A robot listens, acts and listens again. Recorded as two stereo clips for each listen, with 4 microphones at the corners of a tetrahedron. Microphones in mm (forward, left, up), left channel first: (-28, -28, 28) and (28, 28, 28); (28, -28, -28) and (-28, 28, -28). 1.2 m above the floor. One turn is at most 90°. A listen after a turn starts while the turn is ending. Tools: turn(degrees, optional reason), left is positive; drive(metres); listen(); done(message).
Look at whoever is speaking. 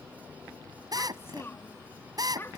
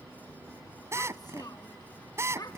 turn(degrees=-80, reason="The child speaking: 80° right.")
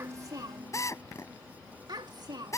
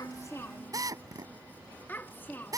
turn(degrees=20, reason="The child speaking is now 20° left.")
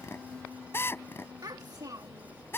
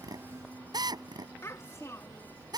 done("Facing the child speaking.")